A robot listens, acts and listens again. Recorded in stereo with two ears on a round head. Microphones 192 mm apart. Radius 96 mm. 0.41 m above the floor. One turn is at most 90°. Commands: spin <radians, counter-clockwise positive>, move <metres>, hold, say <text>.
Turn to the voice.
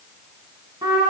hold
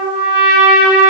hold
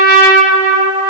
say I can't make out anyone speaking to turn to.